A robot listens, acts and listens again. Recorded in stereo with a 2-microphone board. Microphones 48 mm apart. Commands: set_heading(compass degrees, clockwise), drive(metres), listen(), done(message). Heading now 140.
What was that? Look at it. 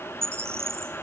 set_heading(205)
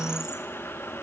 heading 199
listen()
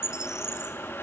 set_heading(209)
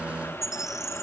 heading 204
done("Found it: a bird, straight ahead, 2 to 4 m away.")